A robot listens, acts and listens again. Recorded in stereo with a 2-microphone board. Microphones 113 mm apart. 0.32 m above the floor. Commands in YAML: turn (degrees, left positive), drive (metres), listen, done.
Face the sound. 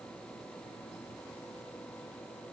listen: true
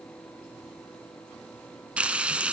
turn: -30
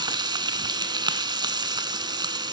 turn: -140
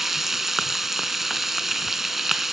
done: "Found it: frying, straight ahead, 1 to 2 m away."